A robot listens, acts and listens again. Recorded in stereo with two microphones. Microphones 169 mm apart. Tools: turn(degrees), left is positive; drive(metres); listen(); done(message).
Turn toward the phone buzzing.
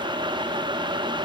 listen()
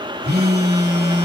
turn(degrees=-65)
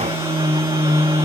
turn(degrees=-15)
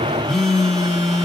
done("Facing the phone buzzing, 1 to 2 m away.")